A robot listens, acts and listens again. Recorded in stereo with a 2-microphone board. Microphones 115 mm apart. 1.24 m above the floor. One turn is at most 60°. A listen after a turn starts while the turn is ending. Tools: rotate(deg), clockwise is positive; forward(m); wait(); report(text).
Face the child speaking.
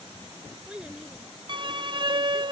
rotate(30)
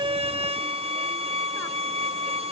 wait()
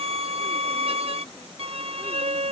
wait()
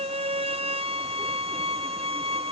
report("I heard a child speaking, but can't make it out now. It was about 20° left or 140° right.")